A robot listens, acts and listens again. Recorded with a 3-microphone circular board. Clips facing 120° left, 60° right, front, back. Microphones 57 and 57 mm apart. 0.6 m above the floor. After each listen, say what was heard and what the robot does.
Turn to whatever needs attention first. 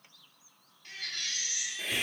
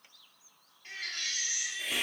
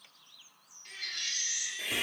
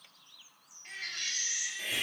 The baby crying: 120° right. Turn 120° right.
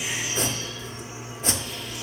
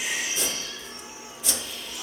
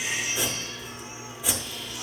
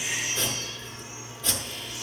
The baby crying is now 45° right. Turn 45° right.
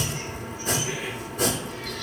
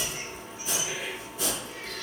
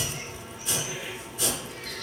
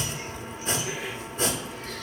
Keep listening.
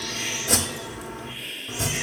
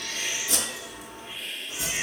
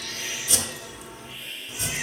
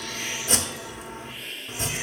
Keep listening.
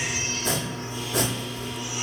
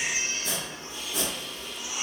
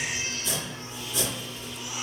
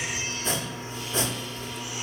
I heard a baby crying from this way, but can't make it out now.